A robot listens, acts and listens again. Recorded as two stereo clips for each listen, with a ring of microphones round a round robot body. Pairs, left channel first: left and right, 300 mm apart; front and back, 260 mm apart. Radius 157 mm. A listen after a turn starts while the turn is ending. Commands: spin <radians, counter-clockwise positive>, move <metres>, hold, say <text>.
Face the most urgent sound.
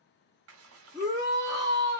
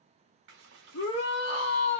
spin -0.17
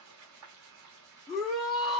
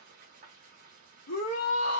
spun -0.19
say Facing the shout.